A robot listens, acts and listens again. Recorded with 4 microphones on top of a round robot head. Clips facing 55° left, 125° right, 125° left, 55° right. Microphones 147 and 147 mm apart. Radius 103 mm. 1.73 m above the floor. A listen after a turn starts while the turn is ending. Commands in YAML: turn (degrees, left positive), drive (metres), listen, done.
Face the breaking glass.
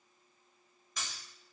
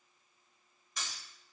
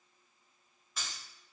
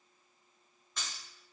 turn: 45
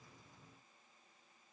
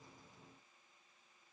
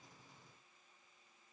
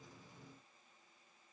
done: "I heard breaking glass from this way, but can't make it out now."